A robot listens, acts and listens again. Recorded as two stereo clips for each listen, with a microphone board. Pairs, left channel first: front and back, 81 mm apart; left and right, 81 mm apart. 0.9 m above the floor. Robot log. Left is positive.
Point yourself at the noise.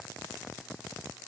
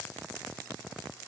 cmd idle
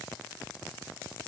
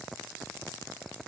cmd idle
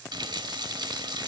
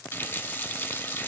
note: The running tap: 160° left.
cmd yaw +160
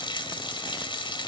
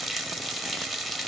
end: Found it: a running tap, straight ahead.